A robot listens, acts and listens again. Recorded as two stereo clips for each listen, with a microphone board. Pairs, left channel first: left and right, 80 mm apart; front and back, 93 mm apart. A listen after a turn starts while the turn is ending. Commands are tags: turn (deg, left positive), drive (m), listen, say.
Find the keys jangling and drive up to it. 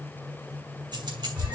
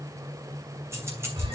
<turn deg="-120"/>
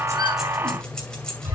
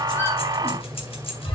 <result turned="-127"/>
<turn deg="10"/>
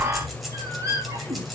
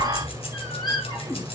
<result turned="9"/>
<drive m="1.0"/>
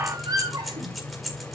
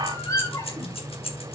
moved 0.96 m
<drive m="1.0"/>
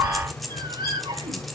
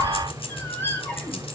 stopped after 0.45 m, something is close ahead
<say>I am next to the keys jangling.</say>